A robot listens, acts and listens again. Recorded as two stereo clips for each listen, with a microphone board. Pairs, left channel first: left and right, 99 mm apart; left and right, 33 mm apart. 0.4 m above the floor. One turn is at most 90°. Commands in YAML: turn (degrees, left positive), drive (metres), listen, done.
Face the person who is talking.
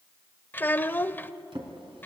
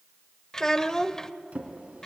turn: 20
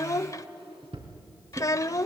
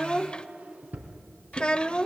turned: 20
turn: 90
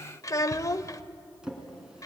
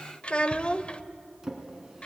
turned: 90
turn: 45
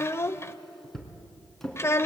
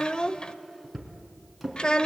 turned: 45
turn: 35
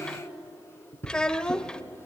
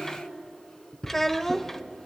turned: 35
turn: 10
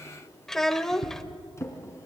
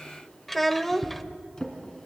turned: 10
done: "Facing the child speaking."